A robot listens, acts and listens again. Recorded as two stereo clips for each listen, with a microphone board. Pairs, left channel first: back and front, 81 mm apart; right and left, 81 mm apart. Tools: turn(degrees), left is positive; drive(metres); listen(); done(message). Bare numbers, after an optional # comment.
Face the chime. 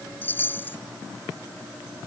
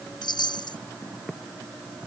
# The chime: 115° right.
turn(-115)
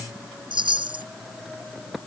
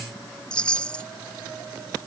# The chime is now 10° right.
turn(-10)
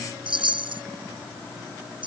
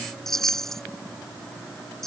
done("Found it: a chime, straight ahead.")